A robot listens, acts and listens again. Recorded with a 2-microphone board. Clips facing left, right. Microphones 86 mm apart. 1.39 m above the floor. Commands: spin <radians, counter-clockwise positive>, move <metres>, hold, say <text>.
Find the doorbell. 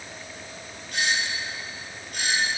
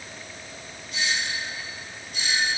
spin 1.05
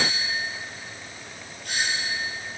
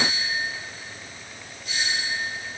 spin 1.05
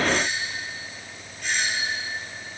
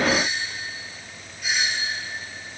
say Facing the doorbell.